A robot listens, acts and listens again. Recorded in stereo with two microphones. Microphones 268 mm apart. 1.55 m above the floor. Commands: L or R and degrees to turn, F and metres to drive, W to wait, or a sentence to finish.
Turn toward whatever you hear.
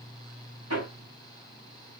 R65
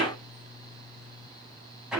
Facing the hammering, over 4 m away.